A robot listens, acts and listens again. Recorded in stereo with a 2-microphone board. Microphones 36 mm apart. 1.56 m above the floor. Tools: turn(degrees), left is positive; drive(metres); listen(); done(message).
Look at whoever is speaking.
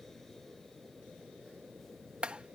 listen()
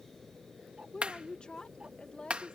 turn(degrees=30)
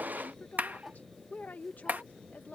turn(degrees=120)
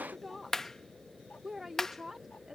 turn(degrees=-10)
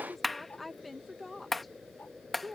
done("Found it: a woman speaking, straight ahead.")